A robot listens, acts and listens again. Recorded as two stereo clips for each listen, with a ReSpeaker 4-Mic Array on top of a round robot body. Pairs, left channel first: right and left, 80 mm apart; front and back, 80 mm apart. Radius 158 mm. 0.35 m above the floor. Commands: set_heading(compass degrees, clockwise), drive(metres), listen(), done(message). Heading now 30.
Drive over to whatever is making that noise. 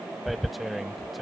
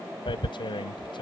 drive(1.0)
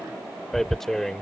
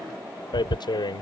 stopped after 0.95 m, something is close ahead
done("I am next to the tearing paper.")